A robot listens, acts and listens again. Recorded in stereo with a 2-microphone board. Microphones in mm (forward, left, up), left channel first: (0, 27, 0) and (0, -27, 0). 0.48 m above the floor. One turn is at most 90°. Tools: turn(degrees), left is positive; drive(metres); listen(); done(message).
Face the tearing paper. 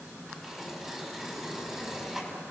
turn(degrees=-30)
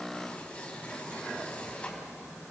turn(degrees=25)
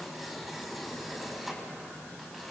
done("Found it: tearing paper, straight ahead, over 4 m away.")